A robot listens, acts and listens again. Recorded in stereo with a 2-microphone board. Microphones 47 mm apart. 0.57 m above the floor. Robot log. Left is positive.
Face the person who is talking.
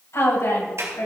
cmd yaw +90
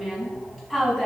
end: Found it: a woman speaking, straight ahead, over 4 m away.